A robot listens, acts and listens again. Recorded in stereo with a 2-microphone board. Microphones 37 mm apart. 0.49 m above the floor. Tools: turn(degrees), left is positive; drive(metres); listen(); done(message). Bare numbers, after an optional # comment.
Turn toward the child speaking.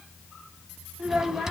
turn(-30)
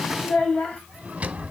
# So it is at 30° left.
turn(30)
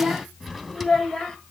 # The child speaking is now 10° left.
turn(10)
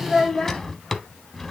# The child speaking is now 15° left.
turn(15)
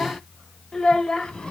# The child speaking is now 20° left.
turn(20)
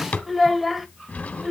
done("Found it: a child speaking, straight ahead, 1 to 2 m away.")